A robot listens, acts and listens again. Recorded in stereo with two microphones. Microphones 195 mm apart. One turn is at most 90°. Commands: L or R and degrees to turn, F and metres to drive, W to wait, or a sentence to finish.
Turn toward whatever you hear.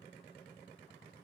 W
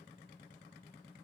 W
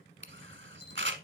R70
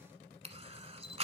R35
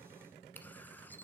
W
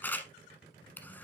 L10
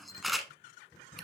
Facing the camera shutter, 1 to 2 m away.